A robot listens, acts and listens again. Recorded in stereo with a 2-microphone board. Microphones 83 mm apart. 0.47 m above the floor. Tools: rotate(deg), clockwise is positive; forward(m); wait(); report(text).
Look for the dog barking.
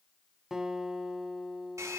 wait()
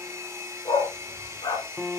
rotate(-90)
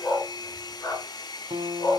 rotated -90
rotate(-40)
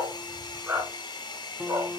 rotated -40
rotate(25)
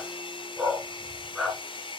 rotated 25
report("Found it: a dog barking, straight ahead.")